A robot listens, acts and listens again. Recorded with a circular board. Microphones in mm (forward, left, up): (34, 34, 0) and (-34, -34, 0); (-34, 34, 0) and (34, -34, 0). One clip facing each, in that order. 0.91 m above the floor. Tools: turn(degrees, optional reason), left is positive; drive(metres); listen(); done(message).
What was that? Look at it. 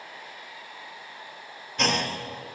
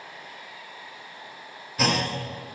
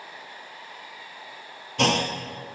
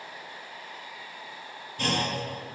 turn(degrees=140, reason="The clunk: 140° left.")
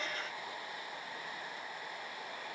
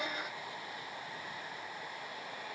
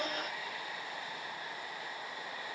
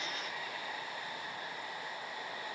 done("I heard a clunk from this way, but can't make it out now.")